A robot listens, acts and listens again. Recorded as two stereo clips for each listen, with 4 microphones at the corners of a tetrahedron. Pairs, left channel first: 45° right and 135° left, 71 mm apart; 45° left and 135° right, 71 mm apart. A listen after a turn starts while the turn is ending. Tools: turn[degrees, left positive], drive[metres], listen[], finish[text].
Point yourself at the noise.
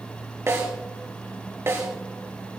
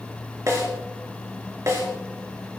Thought: The snare drum: 175° right.
Action: turn[-175]
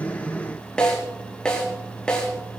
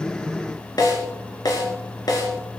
Thought: The snare drum is now 30° left.
Action: turn[30]
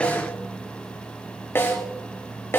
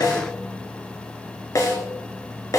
Thought: The snare drum is now 10° left.
Action: turn[10]
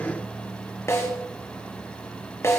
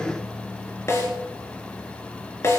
Action: finish[Facing the snare drum, over 4 m away.]